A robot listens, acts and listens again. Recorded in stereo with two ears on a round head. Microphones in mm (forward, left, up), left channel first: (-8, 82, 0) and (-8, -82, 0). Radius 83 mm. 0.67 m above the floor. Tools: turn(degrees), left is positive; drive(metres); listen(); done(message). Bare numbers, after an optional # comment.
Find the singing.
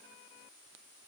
listen()
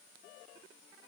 listen()
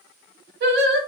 # The singing: about 60° right or 120° right.
turn(-60)
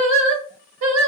# So it is at 80° right.
turn(-80)
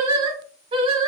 # The singing is now 30° right.
turn(-30)
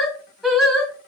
done("Found it: singing, straight ahead.")